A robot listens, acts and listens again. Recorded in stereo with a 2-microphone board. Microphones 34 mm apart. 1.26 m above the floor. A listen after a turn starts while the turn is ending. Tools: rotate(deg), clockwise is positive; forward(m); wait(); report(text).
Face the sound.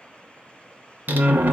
rotate(70)
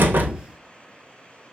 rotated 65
wait()
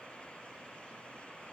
report("I heard a door slam, but can't make it out now. It was about 5° right or 45° right.")